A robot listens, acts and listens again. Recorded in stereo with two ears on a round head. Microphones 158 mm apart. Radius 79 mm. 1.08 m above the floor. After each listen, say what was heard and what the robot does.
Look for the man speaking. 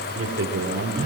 Turn 90° right.
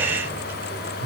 Keep listening.
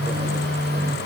Keep listening.
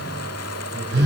I heard a man speaking from this way, but can't make it out now.